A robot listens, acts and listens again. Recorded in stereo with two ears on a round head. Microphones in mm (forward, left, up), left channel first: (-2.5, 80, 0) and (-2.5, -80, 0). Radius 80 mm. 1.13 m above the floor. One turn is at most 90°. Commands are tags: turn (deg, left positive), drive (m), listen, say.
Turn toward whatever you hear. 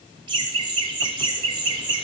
<turn deg="-30"/>
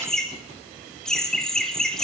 <say>Found it: laughter, straight ahead.</say>